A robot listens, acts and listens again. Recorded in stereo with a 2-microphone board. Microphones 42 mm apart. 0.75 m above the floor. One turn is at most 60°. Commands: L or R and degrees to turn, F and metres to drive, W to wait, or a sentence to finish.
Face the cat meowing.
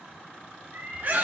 R60
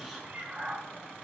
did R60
R25
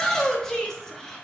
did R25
W
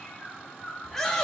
L45
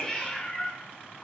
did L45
L25
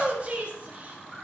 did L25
W
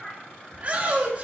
L20
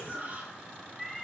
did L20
Found it: a cat meowing, straight ahead, 1 to 2 m away.